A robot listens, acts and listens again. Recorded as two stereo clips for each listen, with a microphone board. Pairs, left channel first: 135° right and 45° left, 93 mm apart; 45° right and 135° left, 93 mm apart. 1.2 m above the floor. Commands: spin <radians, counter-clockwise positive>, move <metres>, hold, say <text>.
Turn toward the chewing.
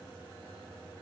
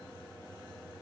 hold
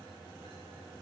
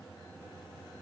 hold
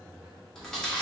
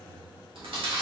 spin 2.53
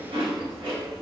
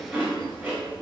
spin 1.05
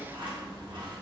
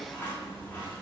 spin 0.35
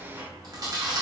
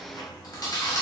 say Facing the chewing, 1 to 2 m away.